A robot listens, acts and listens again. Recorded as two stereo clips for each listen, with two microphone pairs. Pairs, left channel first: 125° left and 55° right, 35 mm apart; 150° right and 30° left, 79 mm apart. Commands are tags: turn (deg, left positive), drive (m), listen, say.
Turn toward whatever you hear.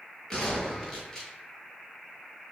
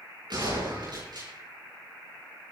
<turn deg="55"/>
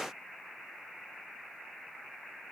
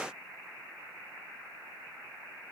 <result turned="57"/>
<say>Facing where the gunshot came from. I can't hear it now.</say>